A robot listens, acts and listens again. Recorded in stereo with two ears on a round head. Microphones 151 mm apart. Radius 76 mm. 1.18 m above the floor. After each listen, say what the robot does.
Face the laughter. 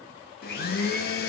Keep listening.
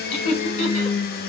Turn 40° left.
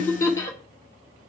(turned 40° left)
Turn 20° left.
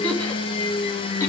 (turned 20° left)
Keep listening.
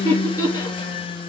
Turn 20° left.
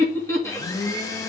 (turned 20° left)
Turn 15° left.
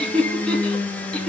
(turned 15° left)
Facing the laughter.